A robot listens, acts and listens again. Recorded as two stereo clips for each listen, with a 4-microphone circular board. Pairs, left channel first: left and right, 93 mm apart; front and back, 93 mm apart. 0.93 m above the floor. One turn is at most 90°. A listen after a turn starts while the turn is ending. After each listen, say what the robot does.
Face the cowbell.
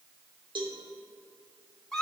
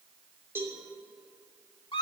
Turn 90° right.
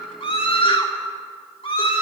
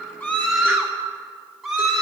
Turn 25° right.
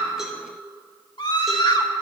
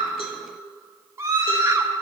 Keep listening.
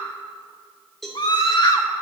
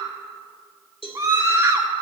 Facing the cowbell.